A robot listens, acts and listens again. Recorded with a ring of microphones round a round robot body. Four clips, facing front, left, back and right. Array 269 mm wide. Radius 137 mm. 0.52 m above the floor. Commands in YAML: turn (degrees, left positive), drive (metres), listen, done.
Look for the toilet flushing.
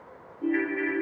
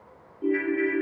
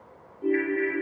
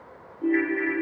listen: true
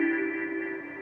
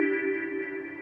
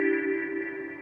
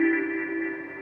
listen: true
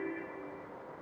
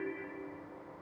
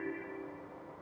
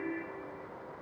done: "I can't make out a toilet flushing to turn to."